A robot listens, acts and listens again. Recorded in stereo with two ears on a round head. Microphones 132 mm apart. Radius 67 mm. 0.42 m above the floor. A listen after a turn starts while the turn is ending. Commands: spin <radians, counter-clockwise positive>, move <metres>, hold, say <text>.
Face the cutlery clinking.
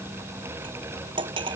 spin -0.61
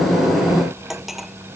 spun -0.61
say Found it: cutlery clinking, straight ahead.